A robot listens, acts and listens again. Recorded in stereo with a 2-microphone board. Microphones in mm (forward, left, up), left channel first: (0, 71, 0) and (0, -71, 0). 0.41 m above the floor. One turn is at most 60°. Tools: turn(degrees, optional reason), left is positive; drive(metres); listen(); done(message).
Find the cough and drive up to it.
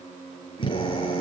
listen()
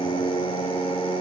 listen()
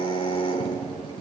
done("I can't make out a cough, only a drill.")